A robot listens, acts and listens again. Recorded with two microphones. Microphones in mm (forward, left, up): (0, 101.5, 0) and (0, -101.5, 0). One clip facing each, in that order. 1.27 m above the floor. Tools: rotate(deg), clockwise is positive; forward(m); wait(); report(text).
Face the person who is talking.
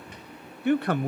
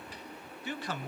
rotate(-60)
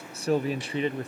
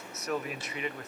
rotate(-35)
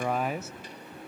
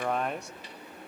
report("Facing the man speaking, under 1 m away.")